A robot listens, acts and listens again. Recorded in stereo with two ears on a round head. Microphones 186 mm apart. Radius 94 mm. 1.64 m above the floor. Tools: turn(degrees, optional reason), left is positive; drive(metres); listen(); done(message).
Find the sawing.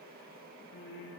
listen()
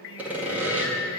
turn(degrees=-30)
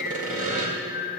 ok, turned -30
turn(degrees=-140, reason="So it is at 140° right.")
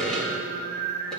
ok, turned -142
done("Found it: sawing, straight ahead.")